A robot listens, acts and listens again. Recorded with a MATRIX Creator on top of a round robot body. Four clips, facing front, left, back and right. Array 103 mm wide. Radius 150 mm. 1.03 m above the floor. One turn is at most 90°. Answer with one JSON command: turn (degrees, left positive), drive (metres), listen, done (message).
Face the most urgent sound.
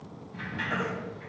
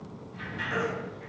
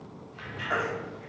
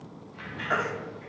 {"turn": -90}
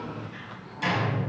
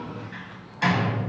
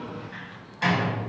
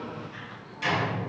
{"turn": -25}
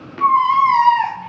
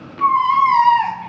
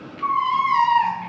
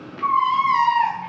{"turn": 40}
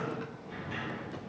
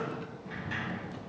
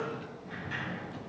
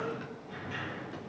{"listen": true}
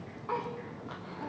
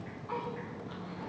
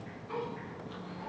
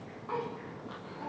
{"turn": -10}
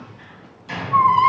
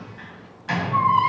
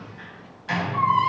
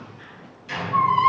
{"done": "Facing the baby crying, 1 to 2 m away."}